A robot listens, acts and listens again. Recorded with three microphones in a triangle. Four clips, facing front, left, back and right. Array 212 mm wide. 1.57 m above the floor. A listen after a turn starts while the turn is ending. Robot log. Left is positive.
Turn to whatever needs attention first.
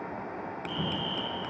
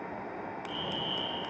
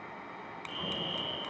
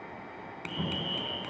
note: The fire alarm: 35° left.
cmd yaw +35
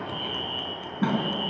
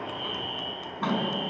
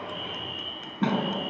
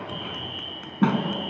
note: The fire alarm is now 15° right.
cmd yaw -15
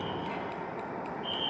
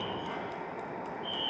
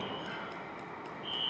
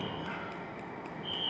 end: Found it: a fire alarm, straight ahead, over 4 m away.